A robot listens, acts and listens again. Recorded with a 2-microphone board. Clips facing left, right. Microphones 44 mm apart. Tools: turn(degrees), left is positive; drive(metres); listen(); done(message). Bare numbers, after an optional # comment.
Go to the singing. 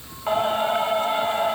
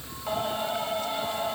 # The singing: about 40° left or 140° left.
turn(40)
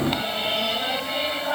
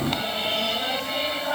drive(1.0)
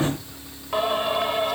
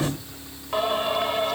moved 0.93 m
drive(1.0)
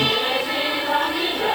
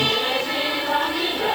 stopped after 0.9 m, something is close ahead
done("I am next to the singing.")